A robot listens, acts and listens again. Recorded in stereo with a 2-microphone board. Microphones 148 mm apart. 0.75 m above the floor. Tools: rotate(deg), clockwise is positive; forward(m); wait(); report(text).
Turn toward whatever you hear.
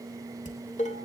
rotate(-55)
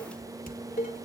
rotate(-70)
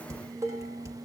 rotate(20)
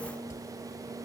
rotate(10)
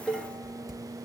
report("Facing the dishes clattering, 2 to 4 m away.")